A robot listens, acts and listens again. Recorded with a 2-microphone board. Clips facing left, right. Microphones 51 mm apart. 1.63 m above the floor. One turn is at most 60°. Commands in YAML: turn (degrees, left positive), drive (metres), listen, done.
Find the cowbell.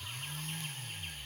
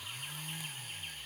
listen: true
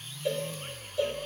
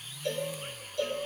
turn: 30
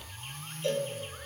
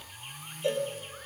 turn: -15
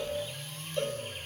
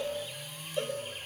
done: "Facing the cowbell, over 4 m away."